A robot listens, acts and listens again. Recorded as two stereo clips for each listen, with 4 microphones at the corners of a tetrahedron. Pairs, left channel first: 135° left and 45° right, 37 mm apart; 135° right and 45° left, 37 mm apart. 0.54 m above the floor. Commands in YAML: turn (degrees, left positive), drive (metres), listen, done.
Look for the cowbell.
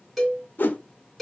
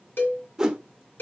turn: -140
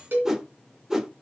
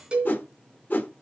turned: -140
turn: -15
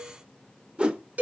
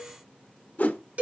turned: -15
done: "Found it: a cowbell, straight ahead, 2 to 4 m away."